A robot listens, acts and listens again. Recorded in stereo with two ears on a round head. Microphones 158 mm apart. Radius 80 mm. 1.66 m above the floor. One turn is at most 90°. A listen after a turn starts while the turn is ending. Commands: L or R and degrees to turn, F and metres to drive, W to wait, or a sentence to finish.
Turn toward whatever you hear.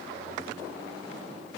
W
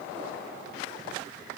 W
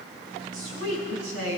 R90
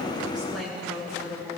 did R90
Facing the woman speaking.